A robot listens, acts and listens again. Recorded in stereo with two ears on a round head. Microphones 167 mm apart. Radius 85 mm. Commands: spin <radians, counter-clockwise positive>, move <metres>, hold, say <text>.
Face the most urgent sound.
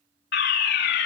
spin 1.13
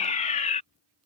spin 0.70
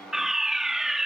say Facing the fire alarm.